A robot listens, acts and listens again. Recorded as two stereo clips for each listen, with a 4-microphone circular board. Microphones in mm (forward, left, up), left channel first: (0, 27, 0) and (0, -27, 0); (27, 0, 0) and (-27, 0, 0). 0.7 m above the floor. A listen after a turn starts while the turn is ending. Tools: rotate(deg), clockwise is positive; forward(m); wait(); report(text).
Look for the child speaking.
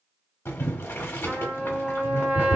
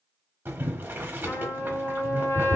wait()
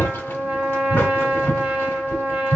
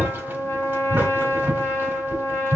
wait()
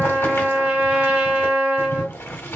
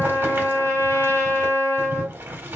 report("I can't make out a child speaking, only a trumpet and boiling.")